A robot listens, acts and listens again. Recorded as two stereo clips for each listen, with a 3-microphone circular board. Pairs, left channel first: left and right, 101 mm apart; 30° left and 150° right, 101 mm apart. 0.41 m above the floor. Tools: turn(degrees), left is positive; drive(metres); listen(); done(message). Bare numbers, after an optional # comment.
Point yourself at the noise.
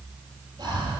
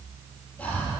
# The breathing: 50° right.
turn(-50)
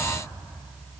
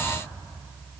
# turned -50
listen()
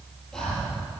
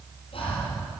done("Found it: breathing, straight ahead.")